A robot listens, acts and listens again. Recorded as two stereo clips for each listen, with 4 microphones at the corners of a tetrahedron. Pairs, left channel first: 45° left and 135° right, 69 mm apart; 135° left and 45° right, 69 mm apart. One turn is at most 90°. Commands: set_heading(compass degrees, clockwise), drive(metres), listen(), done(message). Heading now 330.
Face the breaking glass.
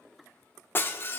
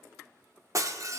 set_heading(340)
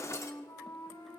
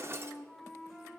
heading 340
done("Found it: breaking glass, straight ahead.")